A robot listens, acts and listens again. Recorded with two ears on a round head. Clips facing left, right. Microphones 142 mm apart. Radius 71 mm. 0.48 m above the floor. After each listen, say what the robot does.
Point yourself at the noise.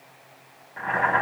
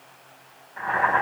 Turn 20° left.
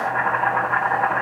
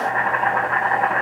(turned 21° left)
Facing the boiling.